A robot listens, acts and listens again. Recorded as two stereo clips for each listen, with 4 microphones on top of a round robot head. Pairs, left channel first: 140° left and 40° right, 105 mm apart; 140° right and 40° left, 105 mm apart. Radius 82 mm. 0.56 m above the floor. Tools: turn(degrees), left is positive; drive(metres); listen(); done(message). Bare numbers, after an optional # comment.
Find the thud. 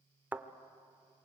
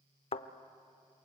# The thud: 115° right.
turn(-115)
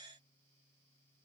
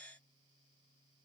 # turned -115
done("I heard a thud from this way, but can't make it out now.")